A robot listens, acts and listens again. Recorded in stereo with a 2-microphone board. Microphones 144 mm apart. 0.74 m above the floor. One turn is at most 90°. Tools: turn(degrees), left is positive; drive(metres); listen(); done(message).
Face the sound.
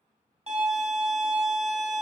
turn(degrees=-45)
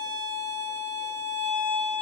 turn(degrees=-85)
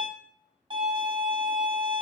turn(degrees=-30)
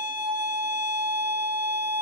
turn(degrees=-10)
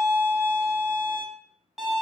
done("Facing the violin, under 1 m away.")